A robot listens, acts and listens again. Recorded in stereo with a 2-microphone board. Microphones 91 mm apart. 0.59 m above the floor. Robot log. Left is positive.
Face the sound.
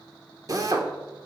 note: The drill: about 40° right or 140° right.
cmd yaw -40
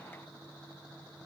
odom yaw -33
cmd idle
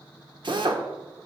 note: So it is at 100° right.
cmd yaw -100
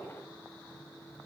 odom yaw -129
note: Nothing new. It was at 30° left.
cmd yaw +30
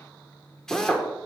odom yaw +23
end: Facing the drill.